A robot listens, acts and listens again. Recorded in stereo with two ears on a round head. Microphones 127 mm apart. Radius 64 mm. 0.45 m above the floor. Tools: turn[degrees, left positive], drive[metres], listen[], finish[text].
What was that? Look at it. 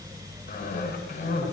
Thought: The cough: about 65° left or 115° left.
Action: turn[65]
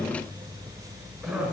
Action: finish[Facing the cough.]